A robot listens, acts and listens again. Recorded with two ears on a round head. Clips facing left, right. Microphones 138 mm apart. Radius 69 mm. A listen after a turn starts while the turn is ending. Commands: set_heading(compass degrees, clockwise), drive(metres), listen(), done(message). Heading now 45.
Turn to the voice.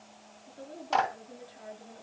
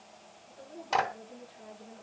set_heading(0)
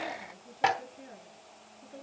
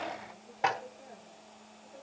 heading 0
set_heading(270)
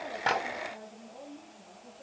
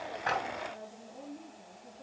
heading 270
done("Facing the woman speaking, over 4 m away.")